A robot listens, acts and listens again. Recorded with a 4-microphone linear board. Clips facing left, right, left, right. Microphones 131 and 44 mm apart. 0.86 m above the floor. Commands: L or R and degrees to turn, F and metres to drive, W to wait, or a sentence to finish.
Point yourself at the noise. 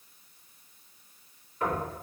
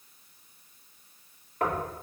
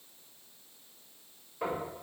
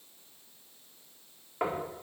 R60
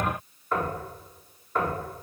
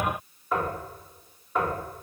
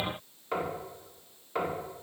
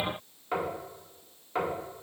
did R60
Found it: knocking, straight ahead.